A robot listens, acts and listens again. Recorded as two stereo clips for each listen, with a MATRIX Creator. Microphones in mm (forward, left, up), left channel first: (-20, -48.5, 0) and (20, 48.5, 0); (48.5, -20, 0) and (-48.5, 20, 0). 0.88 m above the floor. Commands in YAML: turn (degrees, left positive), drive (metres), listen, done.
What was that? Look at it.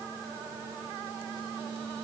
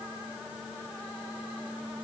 listen: true
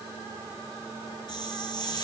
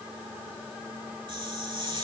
turn: -160
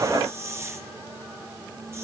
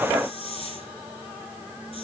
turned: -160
done: "Facing the hiss, 2 to 4 m away."